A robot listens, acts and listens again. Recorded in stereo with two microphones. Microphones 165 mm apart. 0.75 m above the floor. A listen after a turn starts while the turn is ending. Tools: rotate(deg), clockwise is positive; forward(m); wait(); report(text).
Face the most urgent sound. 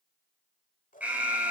rotate(30)
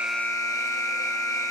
rotate(-20)
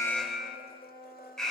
report("Facing the alarm, 2 to 4 m away.")